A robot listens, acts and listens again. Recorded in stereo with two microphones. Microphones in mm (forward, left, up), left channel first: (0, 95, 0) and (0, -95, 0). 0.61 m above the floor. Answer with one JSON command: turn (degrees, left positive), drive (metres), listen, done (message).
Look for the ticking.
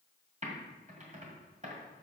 {"listen": true}
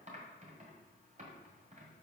{"listen": true}
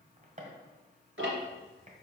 {"turn": -90}
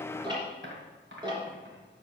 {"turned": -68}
{"turn": -20}
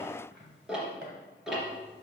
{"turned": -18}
{"done": "Found it: ticking, straight ahead, 2 to 4 m away."}